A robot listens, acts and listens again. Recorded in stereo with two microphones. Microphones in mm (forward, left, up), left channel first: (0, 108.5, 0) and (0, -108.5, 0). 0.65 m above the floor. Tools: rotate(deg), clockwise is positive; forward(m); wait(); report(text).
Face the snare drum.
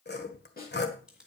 rotate(-45)
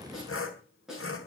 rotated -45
report("Found it: a snare drum, straight ahead, over 4 m away.")